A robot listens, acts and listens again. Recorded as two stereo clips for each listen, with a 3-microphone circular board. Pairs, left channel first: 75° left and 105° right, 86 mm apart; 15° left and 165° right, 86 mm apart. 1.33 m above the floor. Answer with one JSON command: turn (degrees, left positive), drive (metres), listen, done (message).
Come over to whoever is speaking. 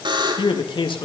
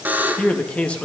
{"turn": 90}
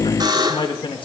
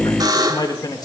{"turn": 55}
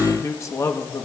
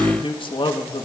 {"turn": 20}
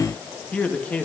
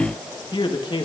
{"drive": 1.0}
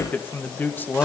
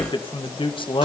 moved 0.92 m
{"drive": 1.0}
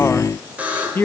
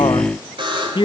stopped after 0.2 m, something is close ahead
{"turn": 10}
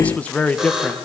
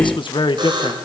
{"done": "Arrived at the man speaking, straight ahead."}